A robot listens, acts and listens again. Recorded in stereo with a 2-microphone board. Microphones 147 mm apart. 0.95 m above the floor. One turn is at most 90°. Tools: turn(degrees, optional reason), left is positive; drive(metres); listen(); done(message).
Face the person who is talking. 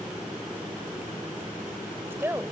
turn(degrees=-15, reason="The woman speaking: about 15° right or 165° right.")
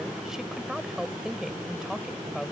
done("Facing the woman speaking.")